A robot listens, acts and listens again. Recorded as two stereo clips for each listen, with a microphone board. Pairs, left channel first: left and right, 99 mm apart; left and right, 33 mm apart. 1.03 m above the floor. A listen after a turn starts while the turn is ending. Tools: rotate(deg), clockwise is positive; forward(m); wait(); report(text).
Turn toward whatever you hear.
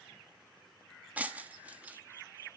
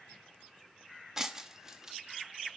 rotate(30)
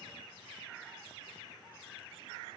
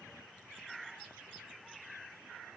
wait()
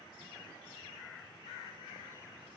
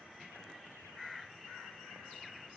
report("I heard breaking glass, but can't make it out now. It was about 15° left or 135° right.")